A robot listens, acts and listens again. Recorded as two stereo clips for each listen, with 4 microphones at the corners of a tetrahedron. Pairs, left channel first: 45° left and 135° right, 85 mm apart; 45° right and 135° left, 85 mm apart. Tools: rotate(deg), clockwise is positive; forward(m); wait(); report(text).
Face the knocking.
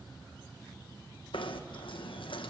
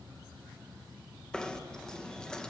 rotate(-35)
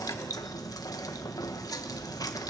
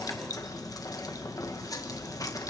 report("Facing the knocking.")